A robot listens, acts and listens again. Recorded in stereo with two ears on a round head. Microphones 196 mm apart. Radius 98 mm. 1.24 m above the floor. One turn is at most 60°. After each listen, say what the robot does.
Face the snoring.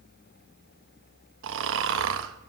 Turn 60° right.
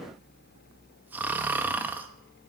Turn 10° right.
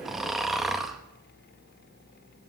Found it: snoring, straight ahead, under 1 m away.